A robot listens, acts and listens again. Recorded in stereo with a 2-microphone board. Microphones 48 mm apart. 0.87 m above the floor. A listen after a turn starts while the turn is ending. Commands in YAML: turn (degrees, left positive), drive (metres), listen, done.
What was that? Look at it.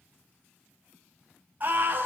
turn: -35
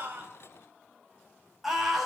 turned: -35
done: "Found it: a scream, straight ahead, over 4 m away."